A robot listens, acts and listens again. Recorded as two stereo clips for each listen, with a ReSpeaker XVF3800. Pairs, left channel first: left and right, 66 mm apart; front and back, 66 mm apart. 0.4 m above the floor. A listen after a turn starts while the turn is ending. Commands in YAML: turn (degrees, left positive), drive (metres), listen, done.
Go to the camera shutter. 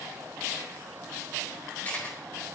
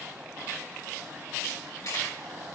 turn: 30
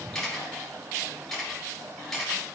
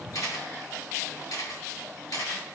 drive: 1.0
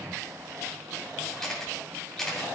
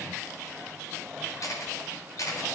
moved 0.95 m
drive: 1.0
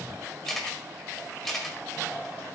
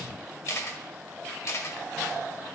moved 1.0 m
drive: 1.0
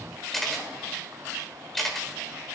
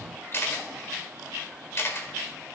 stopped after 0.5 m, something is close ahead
done: "Arrived at the camera shutter, straight ahead."